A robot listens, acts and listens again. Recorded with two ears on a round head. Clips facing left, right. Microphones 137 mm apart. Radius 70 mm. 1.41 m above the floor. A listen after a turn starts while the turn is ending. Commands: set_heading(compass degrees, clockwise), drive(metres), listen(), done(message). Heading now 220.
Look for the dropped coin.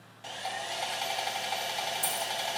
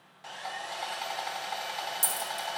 set_heading(285)
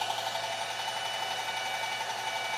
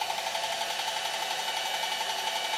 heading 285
listen()
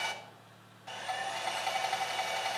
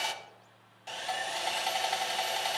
done("I heard a dropped coin, but can't make it out now. It was about straight ahead or 50° right.")